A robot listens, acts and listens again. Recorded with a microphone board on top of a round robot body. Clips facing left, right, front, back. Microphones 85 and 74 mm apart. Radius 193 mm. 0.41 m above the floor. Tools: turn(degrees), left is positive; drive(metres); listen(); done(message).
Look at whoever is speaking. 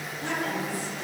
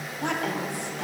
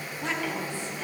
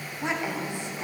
turn(degrees=-110)
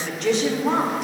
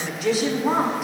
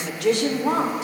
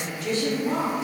done("Facing the woman speaking, 1 to 2 m away.")